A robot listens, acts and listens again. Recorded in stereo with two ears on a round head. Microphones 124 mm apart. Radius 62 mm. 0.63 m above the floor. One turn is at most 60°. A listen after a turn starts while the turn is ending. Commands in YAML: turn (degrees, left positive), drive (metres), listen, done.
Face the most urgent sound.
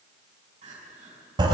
turn: -50
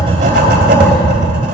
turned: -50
listen: true
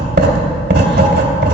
listen: true
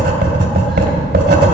done: "I heard crying, but can't make it out now. It was about straight ahead or 80° right."